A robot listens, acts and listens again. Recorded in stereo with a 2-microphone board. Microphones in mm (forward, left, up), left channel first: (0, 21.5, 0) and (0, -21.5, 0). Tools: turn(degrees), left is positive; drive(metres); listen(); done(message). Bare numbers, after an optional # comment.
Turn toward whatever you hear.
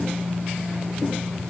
listen()
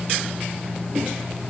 listen()
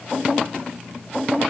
done("I can't make out anything to turn to.")